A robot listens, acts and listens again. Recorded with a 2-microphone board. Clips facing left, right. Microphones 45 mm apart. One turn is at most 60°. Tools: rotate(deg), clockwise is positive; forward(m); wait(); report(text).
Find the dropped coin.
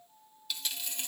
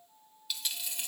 rotate(30)
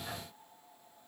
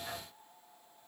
wait()
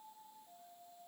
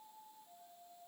report("I heard a dropped coin, but can't make it out now. It was about 25° left or 145° right.")